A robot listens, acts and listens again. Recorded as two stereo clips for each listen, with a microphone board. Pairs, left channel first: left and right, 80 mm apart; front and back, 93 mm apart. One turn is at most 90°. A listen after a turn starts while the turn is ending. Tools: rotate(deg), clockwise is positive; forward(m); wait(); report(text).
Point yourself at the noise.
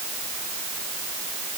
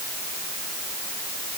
wait()
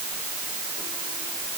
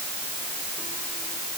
wait()
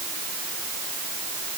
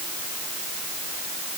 report("I can't make out anything.")